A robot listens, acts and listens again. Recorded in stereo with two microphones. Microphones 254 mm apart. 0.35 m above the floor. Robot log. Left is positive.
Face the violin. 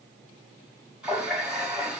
cmd idle
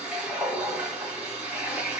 cmd idle
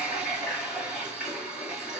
end: I can't make out a violin to turn to.